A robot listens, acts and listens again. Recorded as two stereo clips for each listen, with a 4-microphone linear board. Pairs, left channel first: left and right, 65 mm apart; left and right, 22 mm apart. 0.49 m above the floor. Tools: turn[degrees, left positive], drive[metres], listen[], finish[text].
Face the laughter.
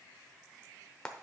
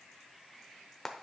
Action: listen[]
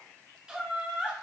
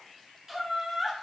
Thought: The laughter: about 15° right or 165° right.
Action: turn[-15]
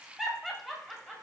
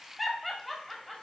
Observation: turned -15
Action: turn[-30]
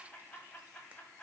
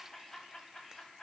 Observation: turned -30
Thought: So it is at 20° left.
Action: turn[20]
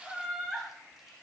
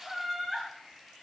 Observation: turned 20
Thought: The laughter is now 10° right.
Action: turn[-10]
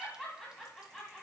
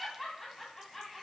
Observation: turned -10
Action: finish[Found it: laughter, straight ahead, 2 to 4 m away.]